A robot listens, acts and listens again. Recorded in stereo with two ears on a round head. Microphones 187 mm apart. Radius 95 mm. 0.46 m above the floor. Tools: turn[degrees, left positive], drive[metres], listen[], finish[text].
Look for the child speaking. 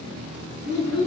Thought: The child speaking: about 55° right or 125° right.
Action: turn[-55]
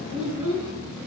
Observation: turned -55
Thought: So it is at 10° right.
Action: turn[-10]
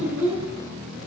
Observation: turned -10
Thought: The child speaking is now 10° right.
Action: turn[-10]
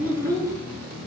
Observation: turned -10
Thought: The child speaking is now 15° right.
Action: turn[-15]
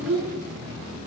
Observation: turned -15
Thought: The child speaking is now 10° right.
Action: turn[-10]
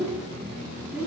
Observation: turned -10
Thought: The child speaking is now 10° right.
Action: turn[-10]
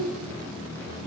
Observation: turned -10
Action: finish[Facing the child speaking.]